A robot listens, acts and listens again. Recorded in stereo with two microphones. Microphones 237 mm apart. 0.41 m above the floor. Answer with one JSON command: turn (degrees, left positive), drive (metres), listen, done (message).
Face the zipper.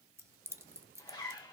{"turn": 20}
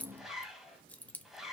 {"done": "Found it: a zipper, straight ahead."}